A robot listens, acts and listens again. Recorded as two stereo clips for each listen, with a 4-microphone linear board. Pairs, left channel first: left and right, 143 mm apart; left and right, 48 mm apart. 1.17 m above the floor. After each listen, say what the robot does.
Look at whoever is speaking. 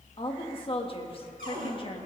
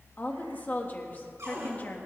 Turn 40° left.
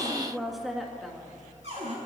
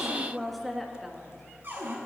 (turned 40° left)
Facing the woman speaking.